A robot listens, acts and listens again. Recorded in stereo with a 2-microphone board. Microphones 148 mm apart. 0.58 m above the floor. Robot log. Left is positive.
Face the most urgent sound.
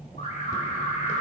note: The alarm: about 60° left or 120° left.
cmd yaw +60
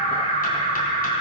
note: So it is at 50° left.
cmd yaw +50
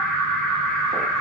end: Found it: an alarm, straight ahead, 2 to 4 m away.